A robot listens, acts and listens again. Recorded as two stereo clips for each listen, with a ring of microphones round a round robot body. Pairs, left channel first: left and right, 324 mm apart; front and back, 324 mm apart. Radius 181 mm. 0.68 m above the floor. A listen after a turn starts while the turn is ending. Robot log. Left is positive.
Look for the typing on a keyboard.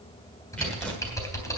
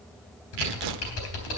note: The typing on a keyboard: 10° left.
cmd yaw +10
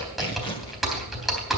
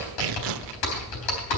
end: Found it: typing on a keyboard, straight ahead, 2 to 4 m away.